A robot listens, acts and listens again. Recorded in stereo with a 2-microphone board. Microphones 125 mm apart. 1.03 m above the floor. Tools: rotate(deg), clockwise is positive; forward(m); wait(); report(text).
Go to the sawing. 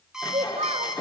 rotate(-35)
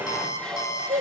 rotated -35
forward(1.0)
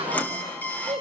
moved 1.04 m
rotate(-15)
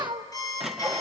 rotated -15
forward(1.0)
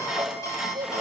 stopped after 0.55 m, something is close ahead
report("I am next to the sawing.")